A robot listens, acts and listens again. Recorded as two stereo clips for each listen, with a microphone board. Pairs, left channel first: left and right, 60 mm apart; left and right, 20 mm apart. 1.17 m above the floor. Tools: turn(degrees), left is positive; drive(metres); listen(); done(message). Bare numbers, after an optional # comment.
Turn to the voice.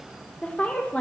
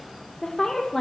# The woman speaking: about 25° left or 155° left.
turn(25)
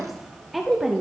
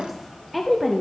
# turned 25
done("Found it: a woman speaking, straight ahead, under 1 m away.")